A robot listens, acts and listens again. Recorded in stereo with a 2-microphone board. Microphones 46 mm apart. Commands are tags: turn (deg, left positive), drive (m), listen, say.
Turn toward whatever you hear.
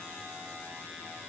<listen/>
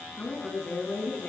<turn deg="40"/>
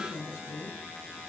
<turn deg="110"/>
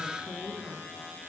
<turn deg="-15"/>
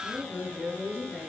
<say>Facing the woman speaking, over 4 m away.</say>